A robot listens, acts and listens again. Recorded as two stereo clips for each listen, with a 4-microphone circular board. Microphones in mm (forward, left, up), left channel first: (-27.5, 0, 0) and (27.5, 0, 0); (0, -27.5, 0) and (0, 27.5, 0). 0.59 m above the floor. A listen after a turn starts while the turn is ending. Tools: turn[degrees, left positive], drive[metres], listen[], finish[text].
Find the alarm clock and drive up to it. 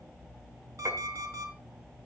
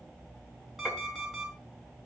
Thought: The alarm clock: 10° left.
Action: turn[10]
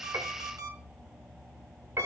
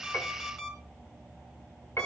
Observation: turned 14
Action: drive[1.0]
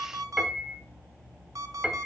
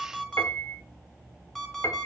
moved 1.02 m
Action: drive[1.0]
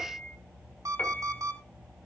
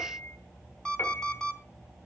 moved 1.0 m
Thought: The alarm clock is now 15° right.
Action: turn[-15]
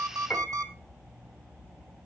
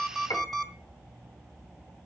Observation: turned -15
Action: drive[1.0]
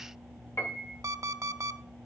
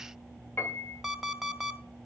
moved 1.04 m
Action: drive[1.0]
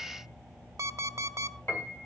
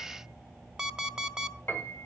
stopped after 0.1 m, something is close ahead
Thought: The alarm clock is now 10° left.
Action: turn[10]
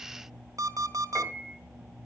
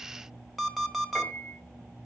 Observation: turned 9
Action: finish[I am next to the alarm clock.]